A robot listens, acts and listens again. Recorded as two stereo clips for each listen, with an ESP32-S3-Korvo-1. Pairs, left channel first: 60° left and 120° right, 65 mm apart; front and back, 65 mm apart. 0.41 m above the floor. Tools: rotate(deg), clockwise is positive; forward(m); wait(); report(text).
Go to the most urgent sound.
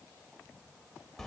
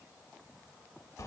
wait()
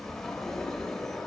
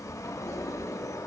wait()
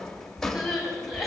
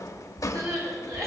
rotate(-150)
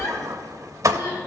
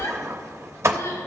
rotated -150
rotate(-25)
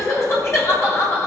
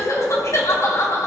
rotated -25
rotate(-25)
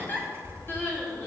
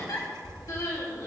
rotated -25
forward(1.0)
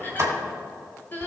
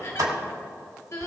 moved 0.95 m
rotate(-10)
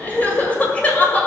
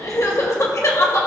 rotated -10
forward(1.0)
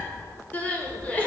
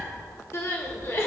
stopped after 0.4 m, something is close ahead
report("I am next to the crying.")